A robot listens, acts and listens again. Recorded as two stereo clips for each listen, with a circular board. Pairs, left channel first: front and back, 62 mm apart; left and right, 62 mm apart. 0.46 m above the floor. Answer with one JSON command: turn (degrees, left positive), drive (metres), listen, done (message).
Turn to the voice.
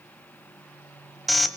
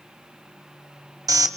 {"listen": true}
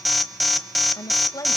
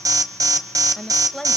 {"done": "Found it: a woman speaking, straight ahead."}